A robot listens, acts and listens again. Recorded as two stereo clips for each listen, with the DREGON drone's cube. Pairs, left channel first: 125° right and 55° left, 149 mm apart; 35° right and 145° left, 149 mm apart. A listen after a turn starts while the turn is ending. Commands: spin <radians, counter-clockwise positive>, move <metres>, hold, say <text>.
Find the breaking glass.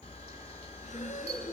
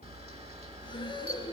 hold
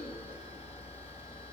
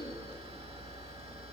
hold
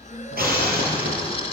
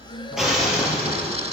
spin 1.05
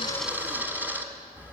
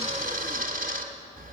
say I heard breaking glass from this way, but can't make it out now.